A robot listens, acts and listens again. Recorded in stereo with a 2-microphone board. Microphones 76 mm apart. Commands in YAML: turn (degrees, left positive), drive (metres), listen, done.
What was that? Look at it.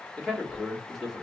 turn: -30
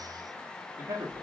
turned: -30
turn: -130
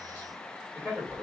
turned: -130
turn: -30
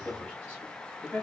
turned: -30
done: "Facing the man speaking, 2 to 4 m away."